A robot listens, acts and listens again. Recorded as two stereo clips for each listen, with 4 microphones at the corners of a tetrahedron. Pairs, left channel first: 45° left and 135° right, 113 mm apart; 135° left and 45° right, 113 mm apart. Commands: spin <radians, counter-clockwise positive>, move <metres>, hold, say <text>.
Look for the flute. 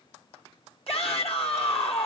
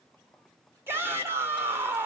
hold
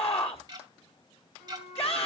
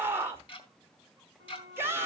spin 2.18
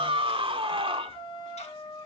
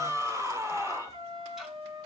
say Facing the flute, over 4 m away.